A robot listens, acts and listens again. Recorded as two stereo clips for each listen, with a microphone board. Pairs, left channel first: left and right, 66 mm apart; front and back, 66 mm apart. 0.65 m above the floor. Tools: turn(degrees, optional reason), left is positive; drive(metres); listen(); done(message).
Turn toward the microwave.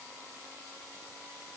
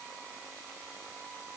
listen()
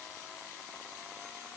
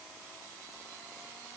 listen()
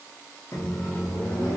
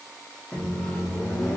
turn(degrees=65, reason="The microwave: 65° left.")
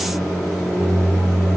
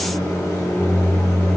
done("Facing the microwave.")